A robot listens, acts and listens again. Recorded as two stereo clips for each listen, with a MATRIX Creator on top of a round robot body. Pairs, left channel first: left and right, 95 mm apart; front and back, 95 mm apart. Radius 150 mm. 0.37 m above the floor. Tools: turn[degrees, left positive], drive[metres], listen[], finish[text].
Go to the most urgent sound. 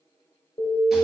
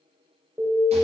Thought: The alarm: 110° left.
Action: turn[110]
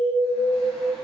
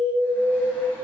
Action: drive[1.0]
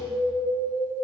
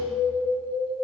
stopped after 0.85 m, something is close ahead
Action: finish[Arrived at the alarm, straight ahead.]